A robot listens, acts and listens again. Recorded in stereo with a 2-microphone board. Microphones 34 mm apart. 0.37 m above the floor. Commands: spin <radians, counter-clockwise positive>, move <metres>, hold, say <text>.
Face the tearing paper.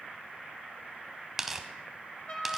spin -0.52
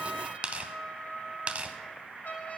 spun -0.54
spin -2.44
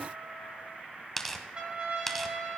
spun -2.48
say Facing the tearing paper, under 1 m away.